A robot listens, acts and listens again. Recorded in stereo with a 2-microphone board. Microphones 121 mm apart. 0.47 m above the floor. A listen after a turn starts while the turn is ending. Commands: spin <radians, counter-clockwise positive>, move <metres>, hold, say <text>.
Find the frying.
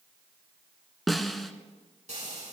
spin -1.57
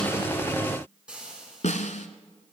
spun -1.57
spin -0.17
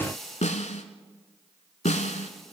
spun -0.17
say Found it: frying, straight ahead, over 4 m away.